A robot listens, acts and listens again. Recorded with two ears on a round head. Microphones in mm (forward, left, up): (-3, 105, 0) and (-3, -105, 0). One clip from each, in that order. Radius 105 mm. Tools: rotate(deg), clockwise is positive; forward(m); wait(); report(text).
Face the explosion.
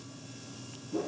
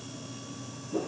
wait()
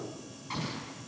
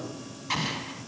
rotate(90)
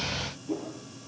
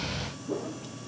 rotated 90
report("I heard an explosion from this way, but can't make it out now.")